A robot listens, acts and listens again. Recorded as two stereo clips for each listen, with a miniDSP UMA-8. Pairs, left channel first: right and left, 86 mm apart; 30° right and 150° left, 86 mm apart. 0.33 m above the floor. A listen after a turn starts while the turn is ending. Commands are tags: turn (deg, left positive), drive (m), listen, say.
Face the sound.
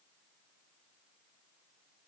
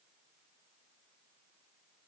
<listen/>
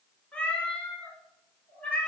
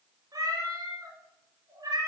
<turn deg="-170"/>
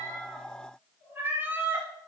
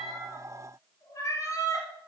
<turn deg="25"/>
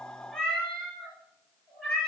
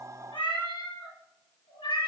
<turn deg="-10"/>
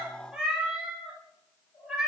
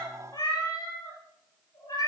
<say>Facing the cat meowing, 2 to 4 m away.</say>